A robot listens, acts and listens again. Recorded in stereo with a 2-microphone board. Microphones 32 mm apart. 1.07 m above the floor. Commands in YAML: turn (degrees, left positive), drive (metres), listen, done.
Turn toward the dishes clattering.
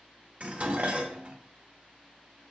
turn: -45
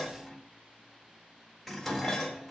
done: "Found it: dishes clattering, straight ahead."